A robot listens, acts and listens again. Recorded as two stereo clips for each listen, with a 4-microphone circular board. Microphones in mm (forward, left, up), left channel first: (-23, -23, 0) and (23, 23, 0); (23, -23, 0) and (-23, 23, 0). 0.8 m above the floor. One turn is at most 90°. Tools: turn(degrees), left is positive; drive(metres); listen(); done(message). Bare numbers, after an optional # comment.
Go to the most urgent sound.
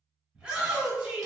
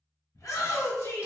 # The shout: 30° right.
turn(-30)
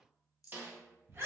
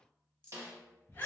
drive(1.0)
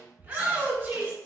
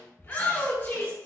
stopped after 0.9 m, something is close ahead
# The shout is now 10° right.
turn(-10)
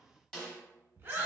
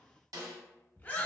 done("I am next to the shout.")